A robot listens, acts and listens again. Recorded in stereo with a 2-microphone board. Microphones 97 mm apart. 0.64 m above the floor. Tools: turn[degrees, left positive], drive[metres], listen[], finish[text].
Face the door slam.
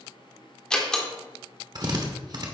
Action: turn[30]
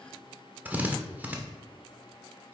Action: listen[]
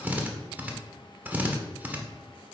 Action: finish[I heard a door slam, but can't make it out now. It was about 20° right or 140° left.]